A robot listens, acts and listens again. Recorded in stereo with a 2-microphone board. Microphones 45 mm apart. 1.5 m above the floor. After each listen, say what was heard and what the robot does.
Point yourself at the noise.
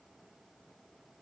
Keep listening.
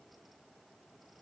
Keep listening.
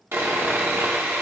The sawing: about 65° right or 115° right. Turn 65° right.
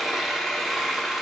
So it is at 10° right. Turn 10° right.
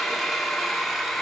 Found it: sawing, straight ahead, 2 to 4 m away.